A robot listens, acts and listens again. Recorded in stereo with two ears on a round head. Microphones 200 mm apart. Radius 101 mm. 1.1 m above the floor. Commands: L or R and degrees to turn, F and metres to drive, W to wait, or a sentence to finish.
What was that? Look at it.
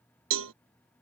R65
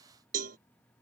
R40
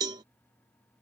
R20
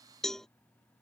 Found it: a cowbell, straight ahead.